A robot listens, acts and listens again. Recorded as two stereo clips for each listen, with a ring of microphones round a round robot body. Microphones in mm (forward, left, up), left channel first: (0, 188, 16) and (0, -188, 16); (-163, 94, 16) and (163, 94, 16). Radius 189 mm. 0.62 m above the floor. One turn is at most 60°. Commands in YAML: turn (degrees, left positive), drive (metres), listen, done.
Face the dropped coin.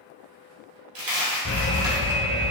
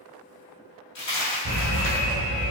turn: -60
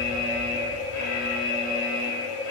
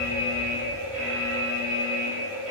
turn: -60
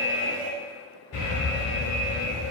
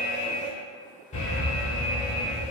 done: "Facing where the dropped coin came from. I can't hear it now."